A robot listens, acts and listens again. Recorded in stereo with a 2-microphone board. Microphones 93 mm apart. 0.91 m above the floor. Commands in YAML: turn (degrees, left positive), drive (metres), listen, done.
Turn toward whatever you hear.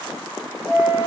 turn: -25
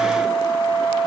turn: -130
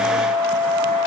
turn: -20
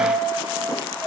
done: "Facing the flute."